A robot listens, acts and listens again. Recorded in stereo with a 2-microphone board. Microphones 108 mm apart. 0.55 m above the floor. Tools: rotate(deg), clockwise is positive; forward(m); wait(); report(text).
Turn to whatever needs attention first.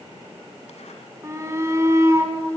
rotate(25)
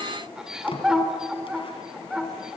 report("Facing the shout.")